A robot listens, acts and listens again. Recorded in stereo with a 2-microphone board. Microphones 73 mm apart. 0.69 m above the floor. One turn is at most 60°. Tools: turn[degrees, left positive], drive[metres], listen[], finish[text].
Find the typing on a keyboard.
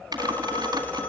Thought: The typing on a keyboard: about 65° right or 115° right.
Action: turn[-60]
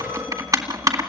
Thought: So it is at 55° right.
Action: turn[-55]
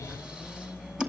Thought: The typing on a keyboard is now 10° right.
Action: turn[-10]
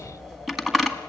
Action: finish[Found it: typing on a keyboard, straight ahead, 2 to 4 m away.]